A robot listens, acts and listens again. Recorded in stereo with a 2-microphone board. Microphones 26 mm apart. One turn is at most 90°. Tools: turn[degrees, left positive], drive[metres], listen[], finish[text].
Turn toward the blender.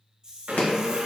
Action: turn[-90]
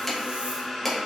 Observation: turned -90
Action: finish[Facing the blender, under 1 m away.]